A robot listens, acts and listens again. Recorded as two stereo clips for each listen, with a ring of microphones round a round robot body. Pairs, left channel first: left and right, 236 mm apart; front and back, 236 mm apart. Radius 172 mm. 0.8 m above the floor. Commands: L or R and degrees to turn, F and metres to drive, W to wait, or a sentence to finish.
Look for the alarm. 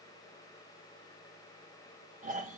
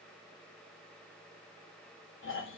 W
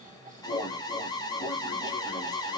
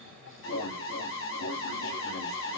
L20
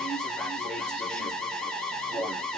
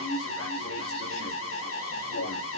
Found it: an alarm, straight ahead.